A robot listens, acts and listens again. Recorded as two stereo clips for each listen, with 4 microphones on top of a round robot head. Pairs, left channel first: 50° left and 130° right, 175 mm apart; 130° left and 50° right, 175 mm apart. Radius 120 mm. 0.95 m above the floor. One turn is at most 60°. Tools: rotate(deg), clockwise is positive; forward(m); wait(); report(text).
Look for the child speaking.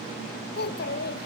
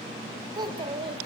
rotate(-10)
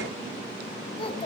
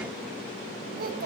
rotate(15)
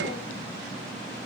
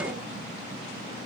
wait()
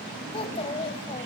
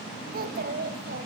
rotate(10)
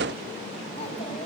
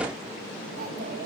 wait()
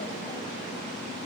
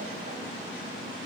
wait()
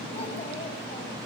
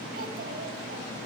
report("Facing where the child speaking came from. I can't hear it now.")